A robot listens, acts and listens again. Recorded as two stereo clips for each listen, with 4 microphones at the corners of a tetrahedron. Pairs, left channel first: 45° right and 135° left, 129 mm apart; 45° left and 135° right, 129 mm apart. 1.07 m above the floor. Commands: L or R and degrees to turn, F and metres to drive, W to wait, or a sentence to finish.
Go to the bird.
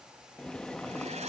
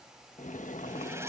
W
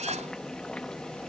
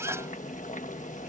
W
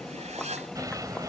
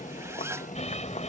L75
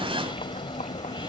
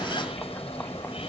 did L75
F1.0
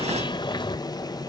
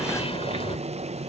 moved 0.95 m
F1.0
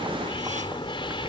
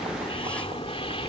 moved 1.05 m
F1.0
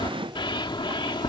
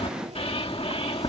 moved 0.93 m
F1.0
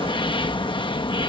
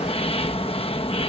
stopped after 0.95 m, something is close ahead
Arrived at the bird, straight ahead.